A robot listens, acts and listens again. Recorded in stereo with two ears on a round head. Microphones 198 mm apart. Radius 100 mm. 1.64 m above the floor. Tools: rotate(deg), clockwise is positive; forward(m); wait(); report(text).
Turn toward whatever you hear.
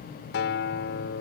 rotate(-55)
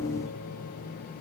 wait()
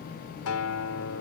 rotate(-70)
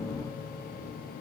wait()
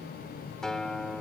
report("Facing the guitar.")